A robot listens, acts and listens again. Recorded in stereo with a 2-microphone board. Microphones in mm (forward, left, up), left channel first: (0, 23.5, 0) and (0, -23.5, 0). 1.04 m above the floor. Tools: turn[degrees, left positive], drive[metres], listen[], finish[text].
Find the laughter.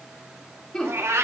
Thought: The laughter: about 20° left or 160° left.
Action: turn[20]
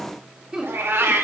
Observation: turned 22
Thought: So it is at 15° right.
Action: turn[-15]
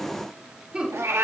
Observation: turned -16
Thought: The laughter is now 20° right.
Action: turn[-20]
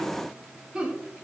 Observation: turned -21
Thought: The laughter is now 20° right.
Action: turn[-20]
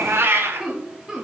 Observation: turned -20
Thought: The laughter is now 10° right.
Action: turn[-10]
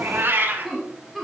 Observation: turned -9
Action: finish[Facing the laughter.]